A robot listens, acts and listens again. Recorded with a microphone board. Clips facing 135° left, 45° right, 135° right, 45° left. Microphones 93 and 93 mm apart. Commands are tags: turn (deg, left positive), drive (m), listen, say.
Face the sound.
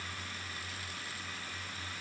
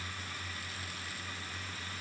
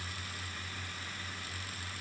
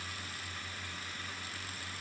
<listen/>
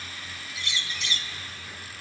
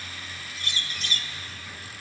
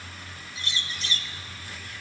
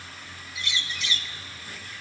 <turn deg="-85"/>
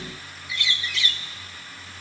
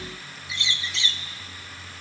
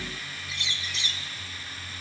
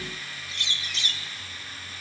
<turn deg="20"/>
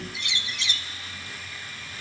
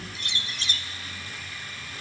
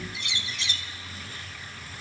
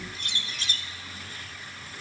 <say>Found it: a bird, straight ahead, under 1 m away.</say>